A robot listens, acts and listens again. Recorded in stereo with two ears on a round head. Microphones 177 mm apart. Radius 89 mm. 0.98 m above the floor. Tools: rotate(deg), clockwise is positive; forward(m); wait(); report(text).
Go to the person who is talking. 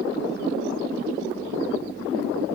wait()
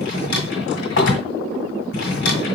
wait()
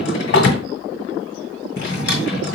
report("I can't make out anyone speaking, only a drawer.")